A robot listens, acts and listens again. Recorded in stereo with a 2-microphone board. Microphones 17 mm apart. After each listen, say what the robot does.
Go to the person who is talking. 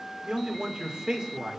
Turn 50° right.
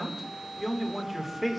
Turn 10° right.
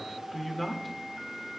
Drive 1.0 m forward.
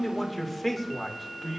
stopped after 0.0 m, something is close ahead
Something is in my way. I am facing the man speaking but have not reached it.